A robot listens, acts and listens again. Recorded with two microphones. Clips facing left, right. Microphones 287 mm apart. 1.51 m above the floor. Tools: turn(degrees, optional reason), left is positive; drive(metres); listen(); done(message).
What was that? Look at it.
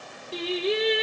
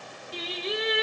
turn(degrees=70, reason="The singing: about 70° left or 110° left.")
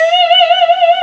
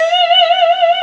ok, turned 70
done("Found it: singing, straight ahead.")